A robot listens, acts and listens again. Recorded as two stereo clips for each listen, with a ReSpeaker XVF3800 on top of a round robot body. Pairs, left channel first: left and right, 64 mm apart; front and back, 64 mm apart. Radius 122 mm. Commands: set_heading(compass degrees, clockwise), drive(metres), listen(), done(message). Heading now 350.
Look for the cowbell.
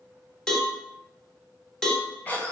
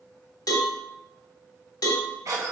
set_heading(340)
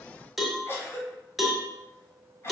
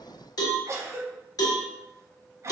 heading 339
done("Facing the cowbell, 1 to 2 m away.")